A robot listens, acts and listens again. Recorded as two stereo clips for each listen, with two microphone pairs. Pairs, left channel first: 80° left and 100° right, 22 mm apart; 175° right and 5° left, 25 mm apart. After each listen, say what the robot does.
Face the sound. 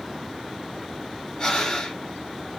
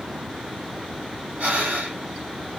Turn 25° left.
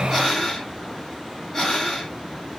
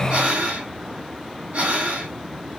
Facing the breathing.